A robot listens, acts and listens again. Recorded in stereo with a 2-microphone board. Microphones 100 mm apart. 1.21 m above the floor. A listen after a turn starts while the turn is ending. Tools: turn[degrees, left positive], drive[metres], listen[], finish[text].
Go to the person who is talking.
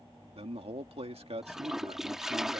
Action: turn[-90]
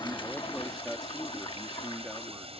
Action: drive[1.0]
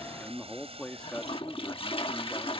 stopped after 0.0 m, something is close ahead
Thought: The man speaking is now 10° left.
Action: turn[10]
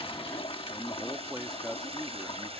Action: finish[Blocked. The man speaking is further on, straight ahead.]